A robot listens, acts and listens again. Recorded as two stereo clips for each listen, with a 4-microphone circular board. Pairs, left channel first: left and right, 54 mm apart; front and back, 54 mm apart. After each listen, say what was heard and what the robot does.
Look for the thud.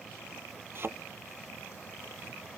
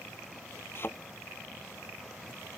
The thud: 45° right. Turn 45° right.
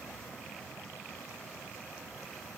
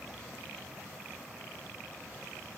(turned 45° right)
I heard a thud from this way, but can't make it out now.